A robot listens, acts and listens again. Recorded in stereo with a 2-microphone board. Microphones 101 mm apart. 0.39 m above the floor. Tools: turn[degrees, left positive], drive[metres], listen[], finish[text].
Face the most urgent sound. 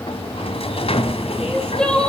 Action: turn[30]
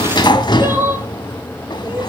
Thought: So it is at 20° right.
Action: turn[-20]
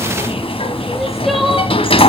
Action: listen[]
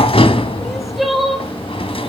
Action: finish[Facing the crying.]